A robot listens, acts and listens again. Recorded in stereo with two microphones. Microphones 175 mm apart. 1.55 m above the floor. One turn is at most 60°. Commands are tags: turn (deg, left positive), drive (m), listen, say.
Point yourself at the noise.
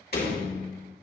<turn deg="60"/>
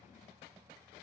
<listen/>
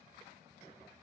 <say>I heard a door slam, but can't make it out now. It was about straight ahead or 60° left.</say>